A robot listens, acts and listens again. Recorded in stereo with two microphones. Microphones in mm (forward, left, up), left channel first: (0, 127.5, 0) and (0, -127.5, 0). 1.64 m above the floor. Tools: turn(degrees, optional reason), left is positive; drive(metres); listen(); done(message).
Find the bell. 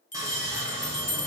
turn(degrees=30, reason="The bell: about 30° left or 150° left.")
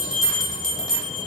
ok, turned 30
done("Facing the bell.")